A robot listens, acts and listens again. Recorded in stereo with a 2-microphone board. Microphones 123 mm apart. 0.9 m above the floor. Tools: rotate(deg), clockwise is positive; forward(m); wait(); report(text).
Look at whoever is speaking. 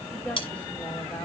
rotate(-30)
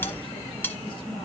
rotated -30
wait()
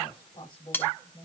rotate(-140)
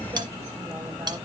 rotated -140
wait()
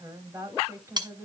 rotate(20)
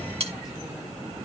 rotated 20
wait()
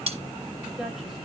report("Found it: a woman speaking, straight ahead, over 4 m away.")